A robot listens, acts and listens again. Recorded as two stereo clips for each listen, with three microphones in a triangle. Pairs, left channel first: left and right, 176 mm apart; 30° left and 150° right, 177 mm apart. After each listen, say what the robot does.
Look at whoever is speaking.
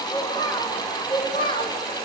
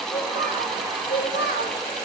Turn 35° left.
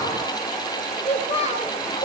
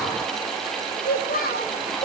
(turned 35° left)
Turn 50° left.
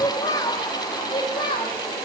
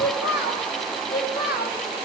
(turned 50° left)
Turn 35° left.
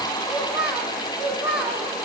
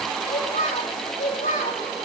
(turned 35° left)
Facing the child speaking.